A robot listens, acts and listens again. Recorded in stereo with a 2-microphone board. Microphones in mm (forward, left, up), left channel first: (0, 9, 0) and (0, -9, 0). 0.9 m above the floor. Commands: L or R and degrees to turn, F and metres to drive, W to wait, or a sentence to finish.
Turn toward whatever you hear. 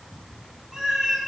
R45
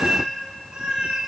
R60
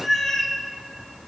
L25
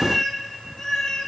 L40
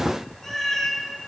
L25
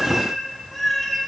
Facing the cat meowing, 1 to 2 m away.